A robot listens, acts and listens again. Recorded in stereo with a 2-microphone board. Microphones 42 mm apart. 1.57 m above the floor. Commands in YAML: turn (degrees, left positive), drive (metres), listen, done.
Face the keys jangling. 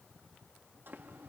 listen: true
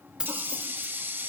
turn: -25
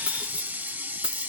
turn: -25
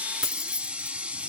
turn: -15
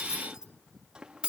turn: -25
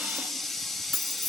done: "Found it: keys jangling, straight ahead, 1 to 2 m away."